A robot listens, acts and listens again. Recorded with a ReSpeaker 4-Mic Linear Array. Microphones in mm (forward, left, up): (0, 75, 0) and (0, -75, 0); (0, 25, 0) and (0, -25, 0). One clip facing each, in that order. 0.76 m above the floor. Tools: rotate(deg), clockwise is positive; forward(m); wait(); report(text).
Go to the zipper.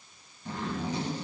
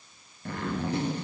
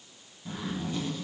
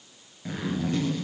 rotate(65)
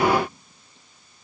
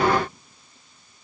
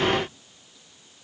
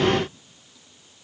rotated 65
wait()
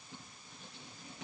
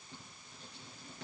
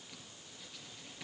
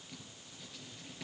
forward(1.0)
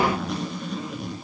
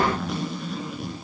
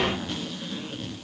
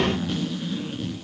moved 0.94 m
forward(1.0)
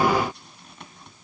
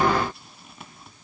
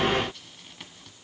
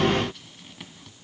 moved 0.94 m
forward(1.0)
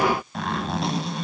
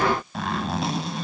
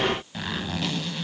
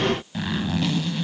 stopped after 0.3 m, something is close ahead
report("I am next to the zipper.")